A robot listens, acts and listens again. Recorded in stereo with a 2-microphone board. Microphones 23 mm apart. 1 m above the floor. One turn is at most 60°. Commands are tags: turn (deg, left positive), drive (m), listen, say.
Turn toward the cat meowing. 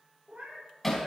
<turn deg="-60"/>
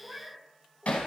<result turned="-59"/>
<turn deg="-30"/>
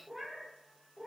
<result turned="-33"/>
<say>Facing the cat meowing.</say>